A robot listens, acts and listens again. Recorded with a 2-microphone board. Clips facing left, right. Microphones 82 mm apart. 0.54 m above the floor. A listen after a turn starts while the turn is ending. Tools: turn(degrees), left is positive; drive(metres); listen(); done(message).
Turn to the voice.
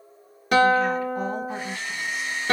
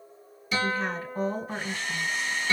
turn(degrees=-35)
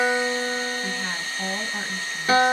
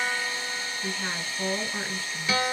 done("Found it: a woman speaking, straight ahead, 2 to 4 m away.")